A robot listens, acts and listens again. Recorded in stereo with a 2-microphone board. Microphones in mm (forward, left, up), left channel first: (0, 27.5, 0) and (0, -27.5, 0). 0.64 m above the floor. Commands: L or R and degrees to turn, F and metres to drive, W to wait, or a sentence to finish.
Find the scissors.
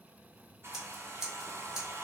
R30
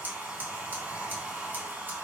R140
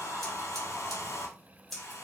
Facing the scissors.